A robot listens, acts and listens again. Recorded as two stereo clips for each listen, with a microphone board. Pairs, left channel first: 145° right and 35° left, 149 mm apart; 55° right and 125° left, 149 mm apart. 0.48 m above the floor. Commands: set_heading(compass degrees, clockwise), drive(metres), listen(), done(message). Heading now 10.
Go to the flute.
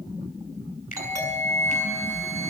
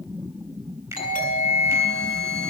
set_heading(230)
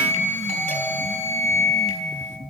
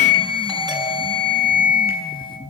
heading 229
drive(1.0)
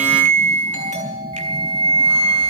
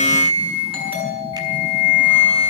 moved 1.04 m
set_heading(239)
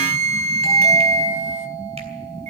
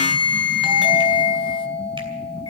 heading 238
drive(1.0)
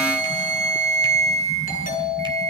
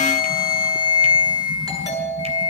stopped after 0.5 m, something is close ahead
done("I am next to the flute.")